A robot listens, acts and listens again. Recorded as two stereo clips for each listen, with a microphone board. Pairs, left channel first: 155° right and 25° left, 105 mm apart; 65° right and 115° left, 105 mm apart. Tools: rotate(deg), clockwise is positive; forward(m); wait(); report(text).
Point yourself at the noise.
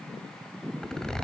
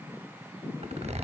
rotate(-120)
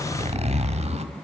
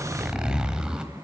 rotate(-30)
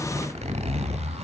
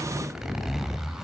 rotate(-25)
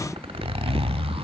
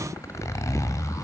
report("Facing the zipper, 1 to 2 m away.")